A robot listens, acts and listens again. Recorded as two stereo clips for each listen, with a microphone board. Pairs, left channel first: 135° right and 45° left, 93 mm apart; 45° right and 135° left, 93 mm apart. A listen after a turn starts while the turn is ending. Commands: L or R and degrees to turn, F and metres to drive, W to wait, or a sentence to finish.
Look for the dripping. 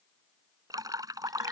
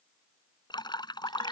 Found it: dripping, straight ahead.